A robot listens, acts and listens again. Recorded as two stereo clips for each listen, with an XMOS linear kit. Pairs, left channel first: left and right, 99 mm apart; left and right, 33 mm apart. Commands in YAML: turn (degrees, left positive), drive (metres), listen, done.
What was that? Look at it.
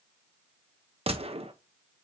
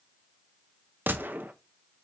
turn: -90
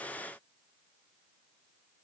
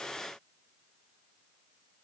done: "Facing where the gunshot came from. I can't hear it now."